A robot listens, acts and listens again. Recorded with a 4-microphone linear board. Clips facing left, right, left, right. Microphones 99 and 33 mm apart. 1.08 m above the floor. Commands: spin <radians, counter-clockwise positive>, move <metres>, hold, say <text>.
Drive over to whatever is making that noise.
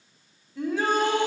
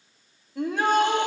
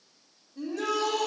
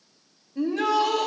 spin -1.05
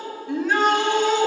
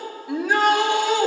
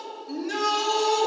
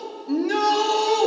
move 1.0
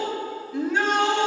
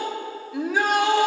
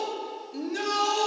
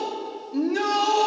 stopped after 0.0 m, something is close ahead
say Something is in my way. I am facing the shout but have not reached it.